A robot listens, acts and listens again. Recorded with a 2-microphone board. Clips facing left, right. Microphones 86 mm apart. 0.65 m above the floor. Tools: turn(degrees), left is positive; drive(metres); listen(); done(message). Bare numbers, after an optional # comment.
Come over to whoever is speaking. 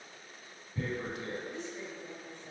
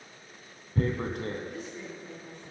# The woman speaking: about 25° left or 155° left.
turn(25)
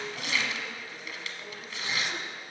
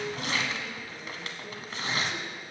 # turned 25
listen()
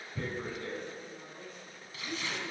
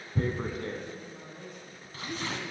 drive(1.0)
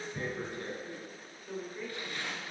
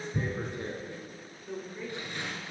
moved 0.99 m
drive(1.0)
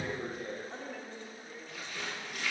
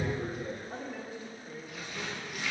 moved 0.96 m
# The woman speaking is now 10° right.
turn(-10)
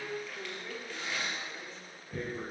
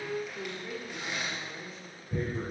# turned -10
drive(1.0)
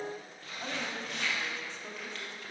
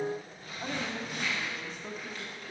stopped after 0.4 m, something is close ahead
done("I am next to the woman speaking.")